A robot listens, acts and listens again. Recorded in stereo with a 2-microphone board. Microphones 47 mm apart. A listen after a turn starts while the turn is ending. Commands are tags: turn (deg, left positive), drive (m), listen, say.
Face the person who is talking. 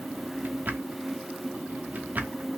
<listen/>
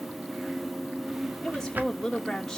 <turn deg="30"/>
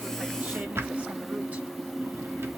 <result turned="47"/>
<listen/>
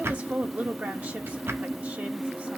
<turn deg="-40"/>
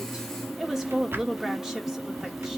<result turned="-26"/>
<turn deg="-10"/>
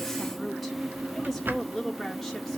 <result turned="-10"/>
<say>Facing the woman speaking, 1 to 2 m away.</say>